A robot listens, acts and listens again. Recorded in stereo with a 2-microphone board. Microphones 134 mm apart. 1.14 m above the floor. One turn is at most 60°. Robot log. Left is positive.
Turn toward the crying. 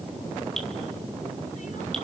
cmd idle
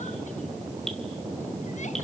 cmd idle
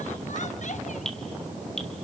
end: I can't make out crying.